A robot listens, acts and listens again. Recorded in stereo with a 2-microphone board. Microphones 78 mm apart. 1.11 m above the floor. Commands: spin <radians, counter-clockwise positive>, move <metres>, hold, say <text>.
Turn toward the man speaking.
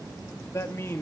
spin 0.52
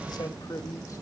spin 2.27
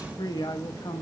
spin 1.31
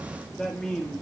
spin 0.17
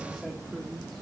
hold
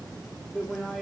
say Facing the man speaking.